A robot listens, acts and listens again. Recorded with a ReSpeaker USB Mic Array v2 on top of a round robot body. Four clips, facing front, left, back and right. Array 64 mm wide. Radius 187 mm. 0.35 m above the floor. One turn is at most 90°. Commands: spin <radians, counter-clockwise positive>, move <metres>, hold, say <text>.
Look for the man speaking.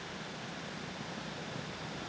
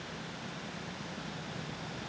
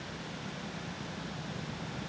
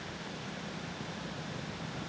hold
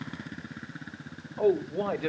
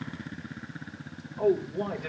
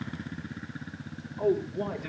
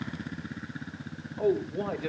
say Found it: a man speaking, straight ahead.